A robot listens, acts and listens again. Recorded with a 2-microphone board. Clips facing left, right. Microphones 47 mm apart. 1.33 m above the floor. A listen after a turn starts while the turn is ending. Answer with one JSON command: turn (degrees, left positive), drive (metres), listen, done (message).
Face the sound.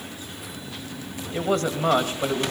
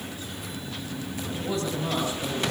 {"turn": 65}
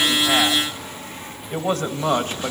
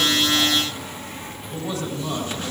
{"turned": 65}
{"turn": 50}
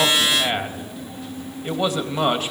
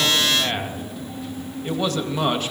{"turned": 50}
{"turn": 10}
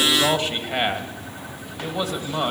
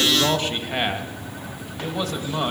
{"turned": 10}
{"done": "Facing the man speaking, 2 to 4 m away."}